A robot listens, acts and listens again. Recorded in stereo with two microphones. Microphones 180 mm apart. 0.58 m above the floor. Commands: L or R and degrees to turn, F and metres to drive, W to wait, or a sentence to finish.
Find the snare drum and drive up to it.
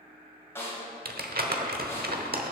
L30
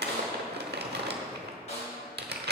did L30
L135
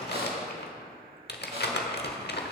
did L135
W
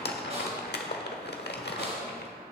W
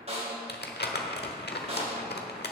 R40
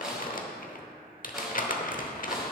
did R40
F1.0
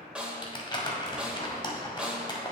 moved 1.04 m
F1.0
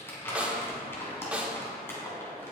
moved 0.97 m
R10
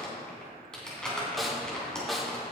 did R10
F1.0
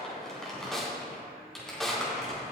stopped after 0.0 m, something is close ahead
Arrived at the snare drum, straight ahead.